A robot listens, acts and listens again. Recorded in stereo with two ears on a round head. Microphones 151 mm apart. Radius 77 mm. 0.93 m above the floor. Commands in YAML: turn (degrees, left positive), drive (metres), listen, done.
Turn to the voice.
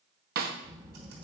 turn: -20
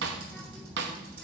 done: "Facing the child speaking."